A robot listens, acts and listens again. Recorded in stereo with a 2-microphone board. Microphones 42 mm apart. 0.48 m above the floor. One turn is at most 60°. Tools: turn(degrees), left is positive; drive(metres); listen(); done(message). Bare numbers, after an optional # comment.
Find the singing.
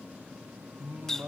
# The singing: about 55° right or 125° right.
turn(-55)
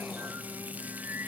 # So it is at 55° right.
turn(-55)
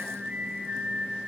# The singing is now 10° right.
turn(-10)
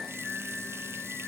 # The singing is now 15° left.
turn(15)
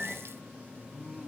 done("Found it: singing, straight ahead, 2 to 4 m away.")